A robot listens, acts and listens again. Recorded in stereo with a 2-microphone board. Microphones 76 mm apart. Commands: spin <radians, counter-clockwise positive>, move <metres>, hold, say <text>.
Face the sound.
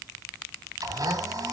spin -0.87
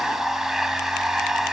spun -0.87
say Facing the blender, 2 to 4 m away.